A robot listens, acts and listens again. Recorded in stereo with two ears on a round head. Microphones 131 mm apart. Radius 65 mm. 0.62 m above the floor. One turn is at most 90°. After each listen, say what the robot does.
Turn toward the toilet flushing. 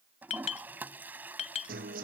Turn 30° right.
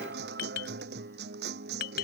Keep listening.
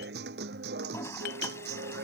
Turn 20° left.
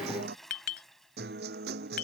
Facing the toilet flushing.